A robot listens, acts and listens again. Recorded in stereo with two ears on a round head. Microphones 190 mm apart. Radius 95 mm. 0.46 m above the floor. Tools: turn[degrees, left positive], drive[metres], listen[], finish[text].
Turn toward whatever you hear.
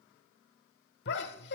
Thought: The laughter: about 55° left or 125° left.
Action: turn[55]
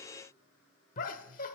Thought: So it is at 50° left.
Action: turn[50]
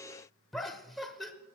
Action: finish[Found it: laughter, straight ahead, 1 to 2 m away.]